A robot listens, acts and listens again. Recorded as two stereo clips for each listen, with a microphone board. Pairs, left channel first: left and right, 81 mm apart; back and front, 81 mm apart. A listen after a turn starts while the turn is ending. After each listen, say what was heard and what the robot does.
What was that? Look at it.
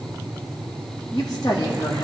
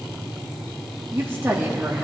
The woman speaking: 70° left. Turn 70° left.
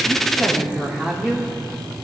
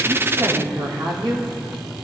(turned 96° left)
The woman speaking is now 15° right. Turn 15° right.
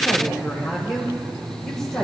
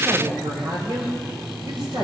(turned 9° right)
Facing the woman speaking.